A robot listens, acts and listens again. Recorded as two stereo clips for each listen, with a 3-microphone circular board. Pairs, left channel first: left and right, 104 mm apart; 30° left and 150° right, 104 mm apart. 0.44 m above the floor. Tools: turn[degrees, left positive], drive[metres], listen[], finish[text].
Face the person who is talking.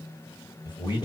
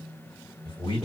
Thought: The man speaking: 55° left.
Action: turn[55]
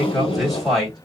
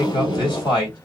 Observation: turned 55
Action: finish[Found it: a man speaking, straight ahead, 1 to 2 m away.]